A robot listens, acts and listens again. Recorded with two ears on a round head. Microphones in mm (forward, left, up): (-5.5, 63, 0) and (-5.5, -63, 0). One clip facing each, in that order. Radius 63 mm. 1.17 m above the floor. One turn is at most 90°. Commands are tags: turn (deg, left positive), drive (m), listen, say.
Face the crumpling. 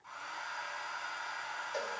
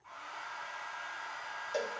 <listen/>
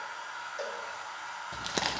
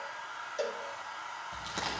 <turn deg="70"/>
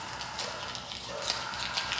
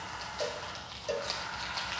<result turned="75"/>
<turn deg="30"/>
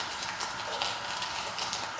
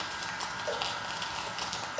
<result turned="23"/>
<say>Facing the crumpling, 1 to 2 m away.</say>